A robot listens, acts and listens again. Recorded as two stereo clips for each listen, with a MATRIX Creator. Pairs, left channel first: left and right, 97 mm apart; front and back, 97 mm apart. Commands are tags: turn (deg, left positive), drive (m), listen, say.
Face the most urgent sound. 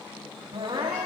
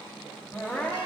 <turn deg="-70"/>
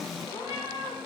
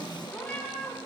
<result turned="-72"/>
<listen/>
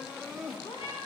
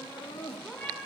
<say>Found it: crying, straight ahead, 2 to 4 m away.</say>